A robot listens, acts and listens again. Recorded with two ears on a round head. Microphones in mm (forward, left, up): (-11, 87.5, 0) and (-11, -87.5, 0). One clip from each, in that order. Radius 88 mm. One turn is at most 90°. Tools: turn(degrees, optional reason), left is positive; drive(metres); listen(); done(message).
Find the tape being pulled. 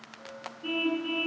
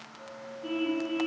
listen()
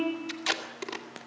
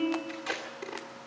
turn(degrees=55, reason="The tape being pulled: about 55° left or 125° left.")
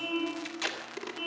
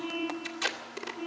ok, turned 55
done("Facing the tape being pulled, 2 to 4 m away.")